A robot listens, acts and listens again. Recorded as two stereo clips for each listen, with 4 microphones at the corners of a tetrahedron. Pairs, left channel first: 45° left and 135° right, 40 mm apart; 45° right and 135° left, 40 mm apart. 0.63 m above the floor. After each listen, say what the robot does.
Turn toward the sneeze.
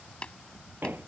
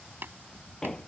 Keep listening.
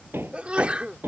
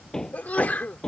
Turn 80° right.
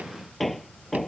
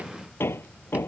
Facing where the sneeze came from. I can't hear it now.